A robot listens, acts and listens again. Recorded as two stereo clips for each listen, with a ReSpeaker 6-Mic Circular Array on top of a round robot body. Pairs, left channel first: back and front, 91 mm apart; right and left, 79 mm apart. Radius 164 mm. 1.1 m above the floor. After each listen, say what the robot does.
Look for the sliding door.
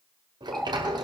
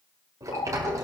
Turn 40° left.
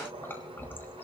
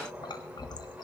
Turn 20° left.
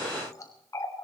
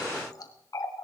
Keep listening.
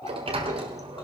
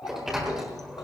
Facing the sliding door, 1 to 2 m away.